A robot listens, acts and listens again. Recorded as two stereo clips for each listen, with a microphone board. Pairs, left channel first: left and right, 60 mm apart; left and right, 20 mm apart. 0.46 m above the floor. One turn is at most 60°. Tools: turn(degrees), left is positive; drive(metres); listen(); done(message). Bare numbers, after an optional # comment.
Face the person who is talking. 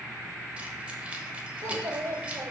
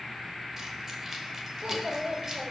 # The child speaking: about 60° right or 120° right.
turn(-60)
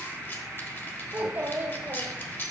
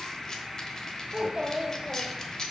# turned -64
# So it is at 35° right.
turn(-35)
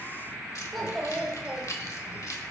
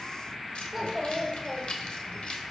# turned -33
done("Facing the child speaking.")